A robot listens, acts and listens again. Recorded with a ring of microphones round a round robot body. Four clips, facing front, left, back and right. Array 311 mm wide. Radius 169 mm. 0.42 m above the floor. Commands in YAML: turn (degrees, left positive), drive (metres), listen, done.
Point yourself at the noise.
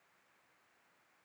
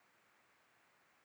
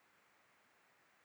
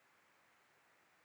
listen: true
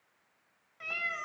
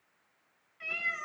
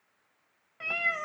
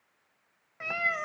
turn: -125
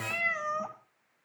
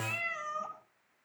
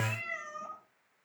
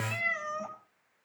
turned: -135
turn: -15
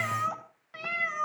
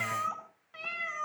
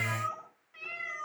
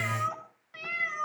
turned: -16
turn: -10
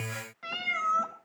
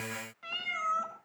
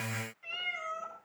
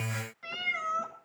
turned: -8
done: "Facing the cat meowing, 2 to 4 m away."